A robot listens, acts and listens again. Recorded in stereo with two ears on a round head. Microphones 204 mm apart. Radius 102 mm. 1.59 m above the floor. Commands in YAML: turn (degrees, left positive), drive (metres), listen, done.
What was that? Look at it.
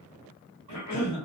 turn: 90
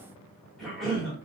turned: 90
done: "Found it: a cough, straight ahead."